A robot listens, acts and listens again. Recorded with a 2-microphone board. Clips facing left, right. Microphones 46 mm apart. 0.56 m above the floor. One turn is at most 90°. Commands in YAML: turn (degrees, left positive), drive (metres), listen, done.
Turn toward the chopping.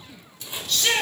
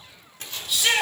turn: 20
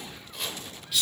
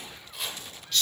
done: "Found it: chopping, straight ahead."